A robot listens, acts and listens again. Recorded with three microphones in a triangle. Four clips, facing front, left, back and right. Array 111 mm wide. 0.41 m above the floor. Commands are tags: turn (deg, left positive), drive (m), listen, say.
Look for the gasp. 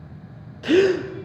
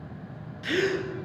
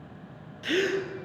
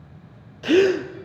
<turn deg="-55"/>
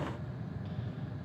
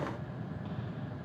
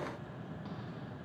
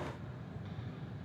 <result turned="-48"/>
<turn deg="-10"/>
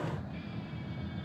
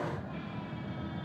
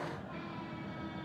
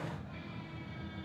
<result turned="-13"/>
<say>I heard a gasp from this way, but can't make it out now.</say>